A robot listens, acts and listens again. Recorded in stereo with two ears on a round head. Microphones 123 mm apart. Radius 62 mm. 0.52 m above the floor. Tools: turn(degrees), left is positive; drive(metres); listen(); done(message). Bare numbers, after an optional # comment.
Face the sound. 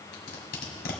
turn(90)
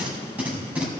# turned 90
# So it is at 10° right.
turn(-10)
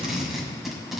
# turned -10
done("Facing the tape being pulled, 1 to 2 m away.")